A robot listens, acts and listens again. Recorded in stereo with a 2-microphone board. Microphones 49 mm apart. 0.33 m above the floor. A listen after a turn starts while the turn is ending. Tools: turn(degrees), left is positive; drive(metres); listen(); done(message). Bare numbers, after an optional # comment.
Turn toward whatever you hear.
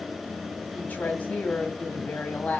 # The woman speaking: about 35° left or 145° left.
turn(35)
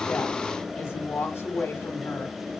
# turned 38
# So it is at 100° left.
turn(100)
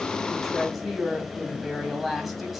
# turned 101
done("Facing the woman speaking.")